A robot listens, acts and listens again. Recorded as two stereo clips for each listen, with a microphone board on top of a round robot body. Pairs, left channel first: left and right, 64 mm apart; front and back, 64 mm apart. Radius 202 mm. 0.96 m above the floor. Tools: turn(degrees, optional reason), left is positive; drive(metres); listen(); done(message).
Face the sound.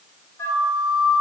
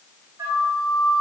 turn(degrees=135, reason="The flute: 135° left.")
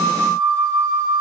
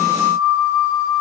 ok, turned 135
done("Found it: a flute, straight ahead.")